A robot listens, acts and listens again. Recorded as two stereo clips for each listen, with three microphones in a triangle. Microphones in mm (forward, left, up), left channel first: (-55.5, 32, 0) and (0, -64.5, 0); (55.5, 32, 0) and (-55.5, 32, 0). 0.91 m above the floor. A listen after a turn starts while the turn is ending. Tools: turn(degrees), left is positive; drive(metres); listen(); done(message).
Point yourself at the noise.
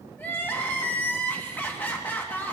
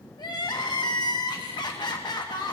turn(degrees=50)
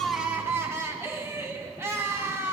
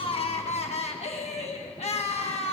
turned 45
done("Found it: crying, straight ahead.")